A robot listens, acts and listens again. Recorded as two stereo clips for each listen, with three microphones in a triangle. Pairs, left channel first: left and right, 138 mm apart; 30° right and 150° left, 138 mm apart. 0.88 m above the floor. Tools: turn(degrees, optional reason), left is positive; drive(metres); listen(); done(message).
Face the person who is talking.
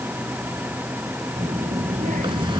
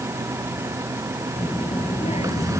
turn(degrees=-70, reason="The child speaking: 70° right.")
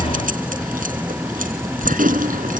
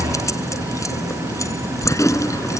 turn(degrees=-25, reason="The child speaking is now 25° right.")
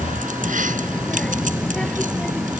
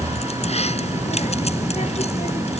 done("Facing the child speaking.")